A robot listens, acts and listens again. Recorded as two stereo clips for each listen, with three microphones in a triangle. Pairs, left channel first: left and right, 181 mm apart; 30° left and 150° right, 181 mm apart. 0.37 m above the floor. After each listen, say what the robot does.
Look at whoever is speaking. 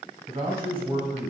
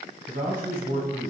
Turn 155° right.
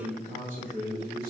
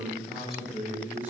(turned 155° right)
Turn 70° right.
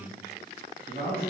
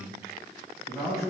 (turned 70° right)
Turn 45° right.
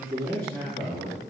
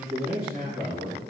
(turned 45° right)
Turn 10° left.
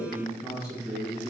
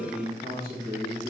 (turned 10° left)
Found it: a man speaking, straight ahead, 2 to 4 m away.